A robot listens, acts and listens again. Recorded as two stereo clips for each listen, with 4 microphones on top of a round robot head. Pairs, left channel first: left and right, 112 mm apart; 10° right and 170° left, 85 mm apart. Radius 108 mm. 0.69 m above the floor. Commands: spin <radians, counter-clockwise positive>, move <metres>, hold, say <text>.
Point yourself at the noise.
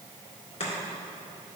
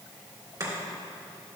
spin 2.18
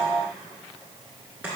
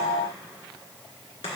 spin -0.17
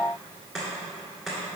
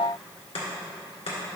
say Facing the chopping.